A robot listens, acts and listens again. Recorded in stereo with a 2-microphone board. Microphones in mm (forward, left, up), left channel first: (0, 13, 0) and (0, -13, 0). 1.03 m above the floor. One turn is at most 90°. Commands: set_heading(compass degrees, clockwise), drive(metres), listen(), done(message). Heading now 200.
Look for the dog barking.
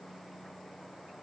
listen()
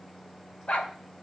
set_heading(145)
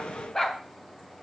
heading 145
set_heading(120)
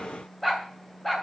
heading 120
set_heading(110)
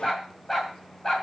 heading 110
set_heading(100)
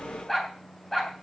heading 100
done("Found it: a dog barking, straight ahead, 2 to 4 m away.")